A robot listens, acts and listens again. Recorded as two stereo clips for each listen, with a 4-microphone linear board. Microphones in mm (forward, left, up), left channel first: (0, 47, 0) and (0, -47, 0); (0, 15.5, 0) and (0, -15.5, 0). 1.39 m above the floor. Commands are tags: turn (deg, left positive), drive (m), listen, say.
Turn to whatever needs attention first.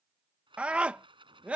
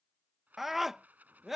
<turn deg="-30"/>
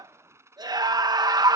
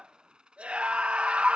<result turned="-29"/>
<turn deg="-140"/>
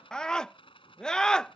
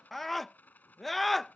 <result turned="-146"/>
<turn deg="10"/>
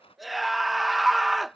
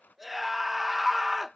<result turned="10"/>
<say>Found it: a scream, straight ahead.</say>